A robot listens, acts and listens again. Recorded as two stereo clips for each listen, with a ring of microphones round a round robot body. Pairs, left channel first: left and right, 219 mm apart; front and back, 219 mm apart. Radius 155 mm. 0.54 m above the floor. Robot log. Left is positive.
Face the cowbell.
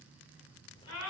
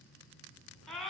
cmd idle
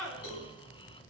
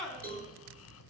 note: The cowbell: 130° left.
cmd yaw +130
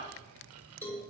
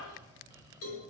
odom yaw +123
note: The cowbell is now 10° left.
cmd yaw +10
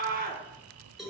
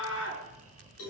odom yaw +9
end: Found it: a cowbell, straight ahead.